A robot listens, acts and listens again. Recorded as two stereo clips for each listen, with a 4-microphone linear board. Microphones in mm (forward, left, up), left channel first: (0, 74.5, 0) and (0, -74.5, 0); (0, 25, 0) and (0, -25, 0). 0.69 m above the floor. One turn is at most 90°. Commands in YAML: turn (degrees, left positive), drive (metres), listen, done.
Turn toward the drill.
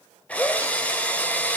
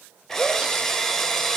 turn: 30
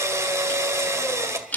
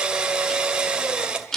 turn: -20
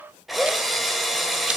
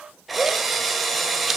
done: "Facing the drill."